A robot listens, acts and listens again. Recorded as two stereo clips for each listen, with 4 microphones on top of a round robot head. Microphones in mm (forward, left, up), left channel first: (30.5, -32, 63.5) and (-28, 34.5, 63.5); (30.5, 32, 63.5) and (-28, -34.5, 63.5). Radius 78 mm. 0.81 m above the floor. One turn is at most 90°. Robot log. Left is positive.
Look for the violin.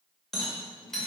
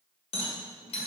cmd idle
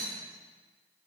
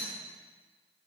cmd idle
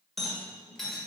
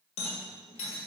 end: I can't make out a violin to turn to.